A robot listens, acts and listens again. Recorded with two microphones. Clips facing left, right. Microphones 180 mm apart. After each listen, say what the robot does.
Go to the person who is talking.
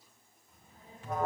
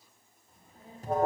Turn 35° right.
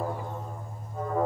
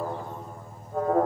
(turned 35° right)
Keep listening.
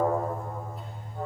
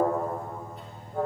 Keep listening.
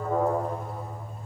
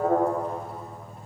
I heard a child speaking, but can't make it out now. It was about straight ahead or 110° right. I did not reach it.